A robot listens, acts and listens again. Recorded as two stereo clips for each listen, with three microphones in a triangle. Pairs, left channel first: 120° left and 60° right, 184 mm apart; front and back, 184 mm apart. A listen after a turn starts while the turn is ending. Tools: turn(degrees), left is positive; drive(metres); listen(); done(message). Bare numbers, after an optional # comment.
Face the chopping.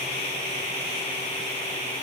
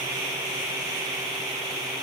listen()
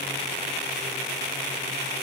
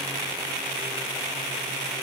listen()
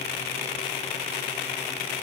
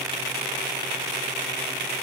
done("I can't make out chopping.")